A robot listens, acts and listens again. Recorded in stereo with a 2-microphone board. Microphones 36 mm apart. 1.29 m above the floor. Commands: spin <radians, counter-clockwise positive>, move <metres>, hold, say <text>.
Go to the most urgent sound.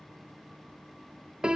hold
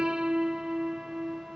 hold
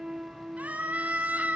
spin -0.79
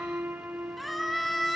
move 1.0
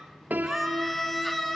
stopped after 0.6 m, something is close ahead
say Blocked. The scream is further on, straight ahead.